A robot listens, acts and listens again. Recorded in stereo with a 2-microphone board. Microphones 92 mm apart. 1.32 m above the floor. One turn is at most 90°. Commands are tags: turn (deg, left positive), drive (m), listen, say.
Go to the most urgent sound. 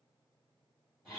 <listen/>
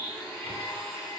<listen/>
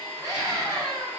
<turn deg="-35"/>
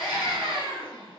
<turn deg="-90"/>
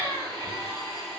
<turn deg="-25"/>
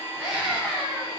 <turn deg="-15"/>
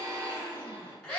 <drive m="1.0"/>
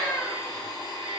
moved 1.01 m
<drive m="1.0"/>
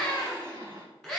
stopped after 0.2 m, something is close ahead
<say>I am next to the scream.</say>